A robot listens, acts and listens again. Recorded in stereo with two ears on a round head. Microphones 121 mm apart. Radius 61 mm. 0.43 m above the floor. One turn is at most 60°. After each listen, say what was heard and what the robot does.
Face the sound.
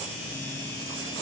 Keep listening.
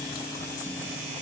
Keep listening.
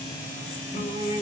The singing: about 55° left or 125° left. Turn 55° left.
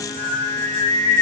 So it is at 35° left. Turn 35° left.
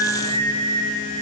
The singing is now 35° left. Turn 35° left.
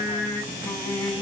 The singing is now 20° left. Turn 20° left.
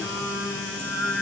Facing the singing.